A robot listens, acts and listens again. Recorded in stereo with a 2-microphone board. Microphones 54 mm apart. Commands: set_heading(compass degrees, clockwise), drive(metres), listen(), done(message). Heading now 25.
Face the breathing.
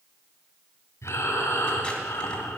set_heading(325)
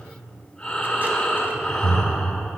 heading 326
set_heading(311)
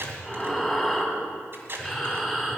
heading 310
done("Found it: breathing, straight ahead.")